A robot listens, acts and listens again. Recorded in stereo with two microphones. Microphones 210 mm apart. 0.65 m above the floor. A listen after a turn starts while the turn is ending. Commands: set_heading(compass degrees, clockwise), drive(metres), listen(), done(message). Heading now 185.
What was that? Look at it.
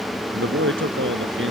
set_heading(255)
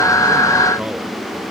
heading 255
listen()
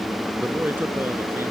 set_heading(265)
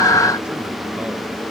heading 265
listen()
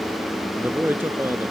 set_heading(275)
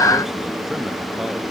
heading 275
listen()
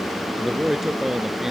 done("Facing the man speaking.")